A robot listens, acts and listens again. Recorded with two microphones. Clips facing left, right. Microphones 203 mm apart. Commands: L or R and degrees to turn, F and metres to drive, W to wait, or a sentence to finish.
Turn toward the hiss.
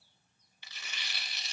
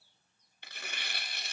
W
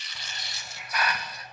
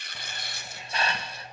R25
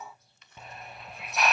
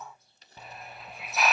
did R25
Found it: a hiss, straight ahead, under 1 m away.